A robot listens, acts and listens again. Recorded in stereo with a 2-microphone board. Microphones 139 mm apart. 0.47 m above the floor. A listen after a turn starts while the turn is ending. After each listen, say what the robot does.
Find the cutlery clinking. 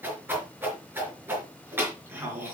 Keep listening.
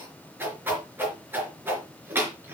Keep listening.
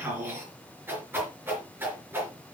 I can't make out cutlery clinking, only a whoosh.